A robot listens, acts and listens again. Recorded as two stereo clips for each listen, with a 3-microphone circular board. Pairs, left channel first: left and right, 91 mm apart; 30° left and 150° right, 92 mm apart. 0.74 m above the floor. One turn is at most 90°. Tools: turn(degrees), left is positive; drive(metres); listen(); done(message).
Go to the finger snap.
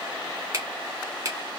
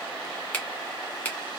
turn(degrees=-45)
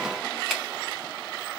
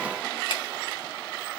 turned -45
listen()
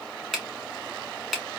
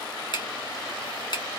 drive(metres=1.0)
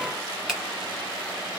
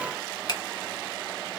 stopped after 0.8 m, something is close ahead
turn(degrees=-10)
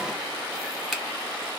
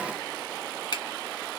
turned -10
done("Arrived at the finger snap, straight ahead.")